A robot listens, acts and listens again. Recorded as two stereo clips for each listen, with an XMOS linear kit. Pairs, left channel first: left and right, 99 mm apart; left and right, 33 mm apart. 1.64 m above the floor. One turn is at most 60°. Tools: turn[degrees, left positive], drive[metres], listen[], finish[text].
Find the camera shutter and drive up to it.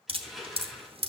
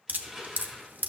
Action: listen[]
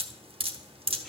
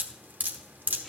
Action: listen[]
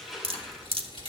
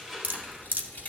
Thought: The camera shutter: about 60° left or 120° left.
Action: turn[60]
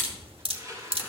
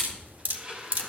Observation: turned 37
Thought: So it is at 30° left.
Action: turn[30]
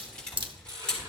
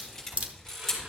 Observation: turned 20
Thought: The camera shutter is now 10° left.
Action: turn[10]
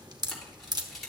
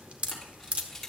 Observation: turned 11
Action: drive[1.0]
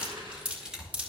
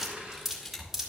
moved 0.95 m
Action: drive[1.0]
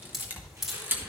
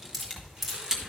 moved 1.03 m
Thought: The camera shutter is now 25° right.
Action: turn[-25]
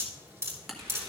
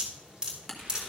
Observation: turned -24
Action: drive[1.0]
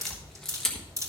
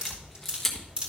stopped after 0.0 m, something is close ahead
Action: finish[I am next to the camera shutter.]